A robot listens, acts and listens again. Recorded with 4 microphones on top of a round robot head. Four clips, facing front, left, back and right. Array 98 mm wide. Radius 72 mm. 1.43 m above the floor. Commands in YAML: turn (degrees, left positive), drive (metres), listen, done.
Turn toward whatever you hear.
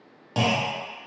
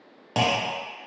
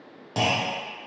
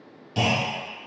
turn: 85
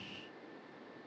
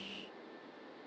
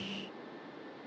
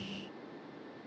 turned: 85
done: "I heard a clunk from this way, but can't make it out now."